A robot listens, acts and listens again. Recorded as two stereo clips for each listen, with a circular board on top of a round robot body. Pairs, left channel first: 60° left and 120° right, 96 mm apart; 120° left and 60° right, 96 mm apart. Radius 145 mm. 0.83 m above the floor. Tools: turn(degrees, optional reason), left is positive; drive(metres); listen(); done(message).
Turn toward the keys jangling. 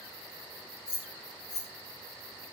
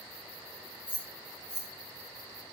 turn(degrees=50, reason="The keys jangling: 50° left.")
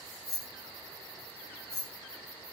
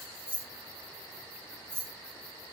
done("Facing the keys jangling, 1 to 2 m away.")